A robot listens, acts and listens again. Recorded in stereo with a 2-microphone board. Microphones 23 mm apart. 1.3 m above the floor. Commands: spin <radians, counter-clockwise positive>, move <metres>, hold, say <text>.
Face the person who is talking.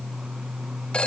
hold
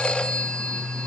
hold
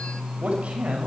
spin -1.22
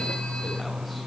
hold
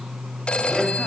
hold
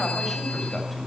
say I heard a man speaking, but can't make it out now. It was about straight ahead or 40° right.